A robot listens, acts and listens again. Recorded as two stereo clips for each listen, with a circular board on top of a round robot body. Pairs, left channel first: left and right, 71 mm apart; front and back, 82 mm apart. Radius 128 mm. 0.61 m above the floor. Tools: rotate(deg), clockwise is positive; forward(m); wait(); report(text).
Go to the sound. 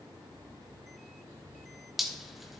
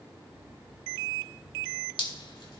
forward(1.0)
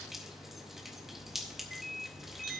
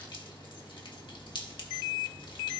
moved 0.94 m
wait()
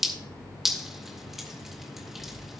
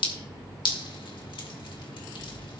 forward(1.0)
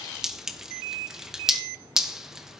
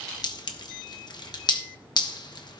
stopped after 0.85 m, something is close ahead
rotate(10)
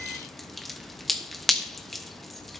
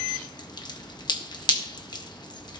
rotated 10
report("Arrived at the dripping, straight ahead.")